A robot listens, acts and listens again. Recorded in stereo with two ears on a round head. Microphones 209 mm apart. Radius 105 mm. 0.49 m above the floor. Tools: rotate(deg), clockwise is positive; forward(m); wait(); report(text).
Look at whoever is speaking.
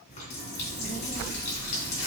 rotate(35)
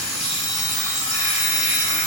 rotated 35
wait()
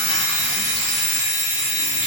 wait()
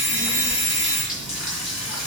rotate(110)
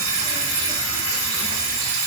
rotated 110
wait()
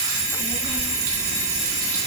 report("Facing the child speaking, 2 to 4 m away.")